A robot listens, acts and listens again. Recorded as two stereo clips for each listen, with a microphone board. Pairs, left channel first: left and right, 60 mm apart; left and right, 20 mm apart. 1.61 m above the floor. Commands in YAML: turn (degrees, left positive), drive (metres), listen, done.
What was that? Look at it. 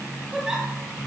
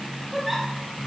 turn: -30
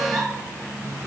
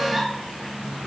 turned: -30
turn: -140
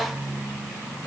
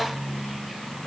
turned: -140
listen: true
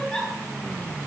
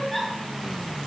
turn: 15
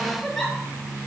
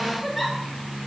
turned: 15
done: "Found it: a giggle, straight ahead."